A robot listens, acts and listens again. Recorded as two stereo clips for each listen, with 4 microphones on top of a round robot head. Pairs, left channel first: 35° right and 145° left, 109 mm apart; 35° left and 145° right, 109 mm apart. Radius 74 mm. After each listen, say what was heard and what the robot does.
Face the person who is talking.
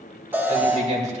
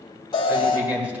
The man speaking: 135° left. Turn 135° left.
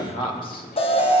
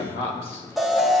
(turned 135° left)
Facing the man speaking, 2 to 4 m away.